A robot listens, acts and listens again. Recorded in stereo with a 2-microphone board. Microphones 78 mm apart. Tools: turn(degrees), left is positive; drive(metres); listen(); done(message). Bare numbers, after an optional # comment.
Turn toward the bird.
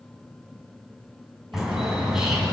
turn(-30)
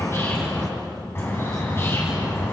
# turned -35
# So it is at 30° left.
turn(30)
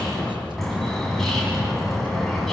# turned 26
done("Found it: a bird, straight ahead, over 4 m away.")